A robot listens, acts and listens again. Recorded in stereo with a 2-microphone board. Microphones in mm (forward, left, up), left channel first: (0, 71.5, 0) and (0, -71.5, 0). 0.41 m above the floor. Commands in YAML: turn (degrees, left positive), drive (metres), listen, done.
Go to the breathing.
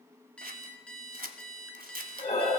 turn: 45
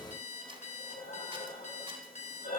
turn: 90
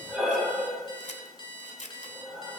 drive: 1.0
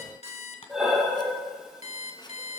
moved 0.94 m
drive: 1.0
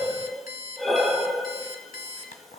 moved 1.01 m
drive: 1.0
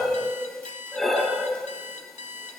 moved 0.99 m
drive: 1.0
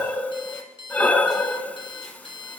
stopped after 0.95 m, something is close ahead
turn: 10
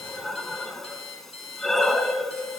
done: "I am next to the breathing."